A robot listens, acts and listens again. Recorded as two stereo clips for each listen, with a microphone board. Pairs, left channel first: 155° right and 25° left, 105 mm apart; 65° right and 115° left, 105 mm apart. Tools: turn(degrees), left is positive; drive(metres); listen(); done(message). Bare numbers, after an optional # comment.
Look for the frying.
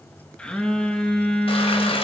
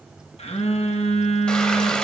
# The frying: 150° right.
turn(-150)
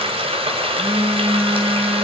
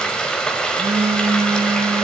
# The frying is now 15° left.
turn(15)
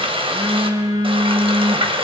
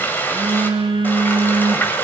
done("Found it: frying, straight ahead.")